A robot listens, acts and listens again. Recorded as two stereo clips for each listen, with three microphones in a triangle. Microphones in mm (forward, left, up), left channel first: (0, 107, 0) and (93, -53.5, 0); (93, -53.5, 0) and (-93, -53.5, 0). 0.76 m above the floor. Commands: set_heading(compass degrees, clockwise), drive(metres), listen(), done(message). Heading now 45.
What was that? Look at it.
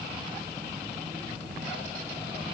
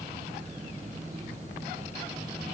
listen()
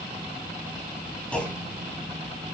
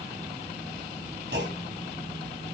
set_heading(200)
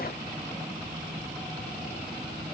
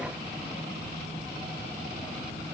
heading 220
set_heading(200)
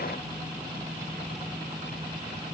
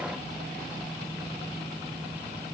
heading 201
done("Facing where the clunk came from. I can't hear it now.")